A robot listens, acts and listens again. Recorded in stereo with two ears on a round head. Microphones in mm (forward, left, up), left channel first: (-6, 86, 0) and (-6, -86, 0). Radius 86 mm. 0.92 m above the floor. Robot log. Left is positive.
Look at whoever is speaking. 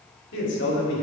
note: The man speaking: about 65° left or 115° left.
cmd yaw +65
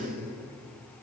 note: So it is at 70° left.
cmd yaw +70
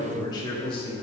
note: The man speaking is now 30° left.
cmd yaw +30
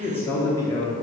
note: The man speaking is now 25° left.
cmd yaw +25
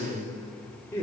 note: The man speaking is now 10° left.
cmd yaw +10
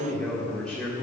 end: Found it: a man speaking, straight ahead.